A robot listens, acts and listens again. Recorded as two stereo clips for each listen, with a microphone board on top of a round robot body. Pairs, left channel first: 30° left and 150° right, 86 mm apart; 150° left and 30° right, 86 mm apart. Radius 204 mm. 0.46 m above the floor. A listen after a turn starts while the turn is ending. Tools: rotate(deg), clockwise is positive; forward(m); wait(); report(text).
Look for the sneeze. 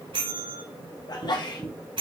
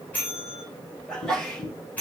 rotate(-70)
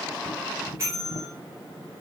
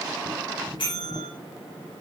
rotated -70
report("Facing where the sneeze came from. I can't hear it now.")